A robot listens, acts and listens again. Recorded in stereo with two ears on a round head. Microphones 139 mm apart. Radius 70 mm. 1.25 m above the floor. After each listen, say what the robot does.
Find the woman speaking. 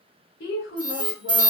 Turn 65° left.
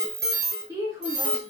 Turn 30° right.
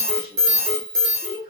Turn 35° right.
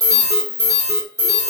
Keep listening.
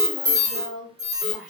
Facing the woman speaking.